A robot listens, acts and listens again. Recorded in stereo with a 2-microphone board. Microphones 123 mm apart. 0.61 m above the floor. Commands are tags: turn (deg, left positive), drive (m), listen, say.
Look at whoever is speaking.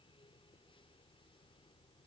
<listen/>
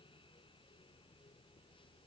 <listen/>
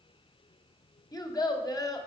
<turn deg="30"/>
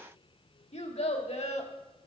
<turn deg="120"/>
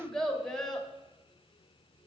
<say>Facing the child speaking, 1 to 2 m away.</say>